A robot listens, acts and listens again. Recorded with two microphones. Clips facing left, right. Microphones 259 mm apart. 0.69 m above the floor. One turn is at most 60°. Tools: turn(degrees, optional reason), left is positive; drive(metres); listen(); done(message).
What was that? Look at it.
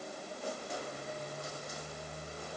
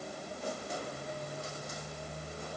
listen()
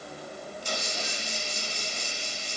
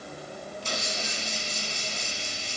turn(degrees=-60, reason="The hiss: about 65° right or 115° right.")
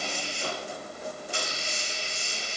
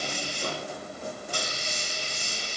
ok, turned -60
turn(degrees=-45, reason="So it is at 45° right.")
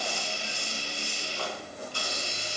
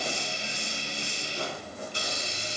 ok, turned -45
turn(degrees=-20, reason="The hiss is now 20° right.")
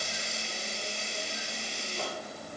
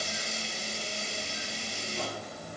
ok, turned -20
done("Facing the hiss, 1 to 2 m away.")